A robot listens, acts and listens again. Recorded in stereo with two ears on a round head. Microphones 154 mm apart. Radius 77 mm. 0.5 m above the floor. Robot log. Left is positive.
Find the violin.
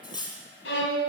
cmd yaw +90
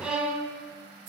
end: Found it: a violin, straight ahead, 2 to 4 m away.